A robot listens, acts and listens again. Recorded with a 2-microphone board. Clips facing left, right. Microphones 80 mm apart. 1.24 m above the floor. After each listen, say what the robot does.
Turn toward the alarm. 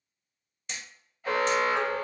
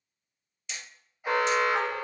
Turn 15° right.
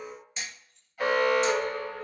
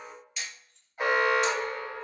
Turn 150° right.
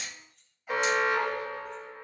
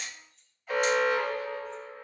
Turn 10° left.
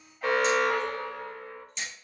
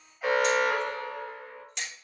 Found it: an alarm, straight ahead, 1 to 2 m away.